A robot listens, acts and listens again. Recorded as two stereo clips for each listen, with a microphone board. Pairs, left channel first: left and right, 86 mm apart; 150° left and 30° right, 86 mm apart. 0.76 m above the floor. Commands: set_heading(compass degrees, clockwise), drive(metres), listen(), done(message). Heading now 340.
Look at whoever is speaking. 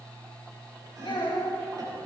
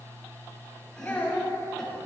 set_heading(255)
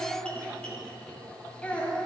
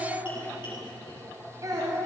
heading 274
set_heading(259)
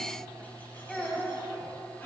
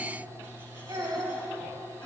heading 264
done("Found it: a child speaking, straight ahead, 2 to 4 m away.")